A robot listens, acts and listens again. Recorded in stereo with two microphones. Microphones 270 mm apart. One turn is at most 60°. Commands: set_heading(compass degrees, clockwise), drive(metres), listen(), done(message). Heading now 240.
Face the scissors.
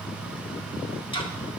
listen()
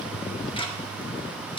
listen()
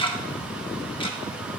done("I can't make out scissors, only ticking.")